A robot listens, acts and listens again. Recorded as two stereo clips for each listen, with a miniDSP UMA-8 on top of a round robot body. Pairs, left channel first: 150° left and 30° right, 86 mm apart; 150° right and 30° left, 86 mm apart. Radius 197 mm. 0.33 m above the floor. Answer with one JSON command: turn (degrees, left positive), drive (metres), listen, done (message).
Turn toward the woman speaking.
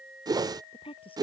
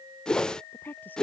{"turn": 140}
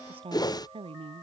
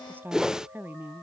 {"turn": -35}
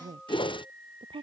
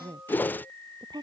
{"done": "Facing the woman speaking."}